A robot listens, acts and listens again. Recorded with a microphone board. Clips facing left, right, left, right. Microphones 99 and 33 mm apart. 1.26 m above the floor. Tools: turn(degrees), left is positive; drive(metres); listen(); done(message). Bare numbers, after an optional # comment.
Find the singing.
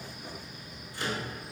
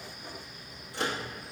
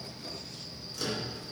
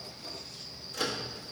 listen()
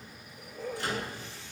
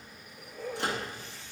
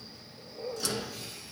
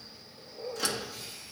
listen()
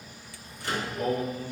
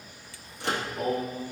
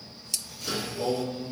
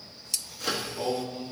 # The singing: about 20° right or 160° right.
turn(-20)
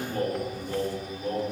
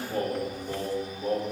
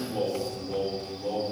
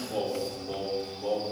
# The singing: about 40° right or 140° right.
turn(-40)
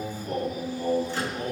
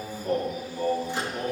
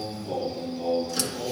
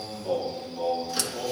# So it is at 100° right.
turn(-100)
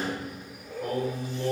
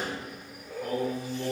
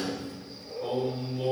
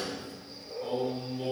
done("Found it: singing, straight ahead.")